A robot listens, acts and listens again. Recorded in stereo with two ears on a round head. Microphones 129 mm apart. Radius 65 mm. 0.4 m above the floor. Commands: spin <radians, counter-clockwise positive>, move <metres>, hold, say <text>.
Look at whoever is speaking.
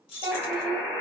spin -0.52
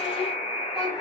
hold
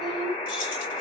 say Found it: a child speaking, straight ahead, under 1 m away.